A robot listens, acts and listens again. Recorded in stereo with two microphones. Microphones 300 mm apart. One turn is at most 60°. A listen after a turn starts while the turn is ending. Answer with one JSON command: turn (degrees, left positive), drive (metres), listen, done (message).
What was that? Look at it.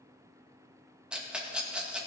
{"turn": -30}
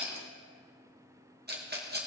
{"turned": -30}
{"turn": -60}
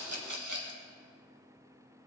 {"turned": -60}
{"turn": -60}
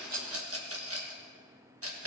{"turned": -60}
{"turn": -50}
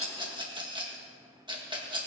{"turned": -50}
{"turn": -15}
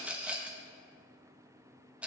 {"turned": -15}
{"done": "Facing the rattle."}